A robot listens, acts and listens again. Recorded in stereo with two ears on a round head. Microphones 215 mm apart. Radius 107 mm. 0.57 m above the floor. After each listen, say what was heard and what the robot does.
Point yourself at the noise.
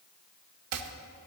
The chopping: about 70° right or 110° right. Turn 70° right.
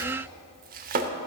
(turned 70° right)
So it is at 40° right. Turn 40° right.
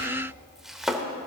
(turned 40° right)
Facing the chopping, under 1 m away.